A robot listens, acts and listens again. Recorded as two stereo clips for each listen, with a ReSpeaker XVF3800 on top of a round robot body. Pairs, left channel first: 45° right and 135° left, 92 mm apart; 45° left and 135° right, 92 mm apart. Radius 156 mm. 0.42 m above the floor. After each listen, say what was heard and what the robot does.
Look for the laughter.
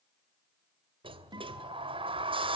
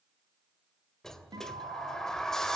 Keep listening.
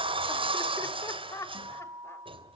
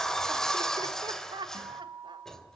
The laughter: 100° right. Turn 100° right.
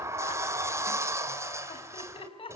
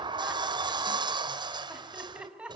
The laughter is now 55° right. Turn 55° right.
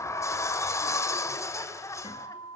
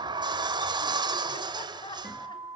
The laughter is now 10° left. Turn 10° left.
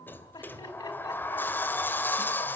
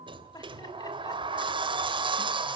Facing the laughter.